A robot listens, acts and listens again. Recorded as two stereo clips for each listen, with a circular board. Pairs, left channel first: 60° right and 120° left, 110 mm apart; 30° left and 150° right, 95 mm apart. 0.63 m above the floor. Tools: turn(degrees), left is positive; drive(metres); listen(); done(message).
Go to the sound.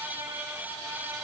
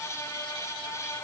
listen()
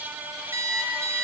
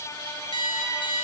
turn(degrees=55)
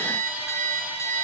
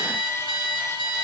drive(metres=1.0)
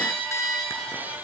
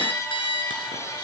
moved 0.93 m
drive(metres=1.0)
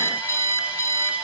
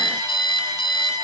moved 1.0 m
drive(metres=1.0)
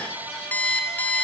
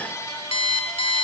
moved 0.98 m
turn(degrees=15)
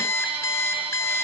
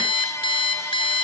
drive(metres=1.0)
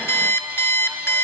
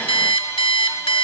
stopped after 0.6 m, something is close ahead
turn(degrees=10)
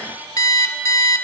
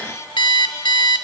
done("Arrived at the alarm clock, straight ahead.")